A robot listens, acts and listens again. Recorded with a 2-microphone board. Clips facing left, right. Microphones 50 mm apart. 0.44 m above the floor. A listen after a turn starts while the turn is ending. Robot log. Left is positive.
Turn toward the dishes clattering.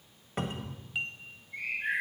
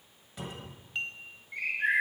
cmd yaw +30
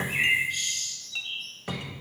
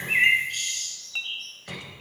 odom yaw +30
note: So it is at 25° right.
cmd yaw -25
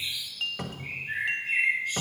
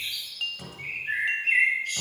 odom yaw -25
end: Facing the dishes clattering, 1 to 2 m away.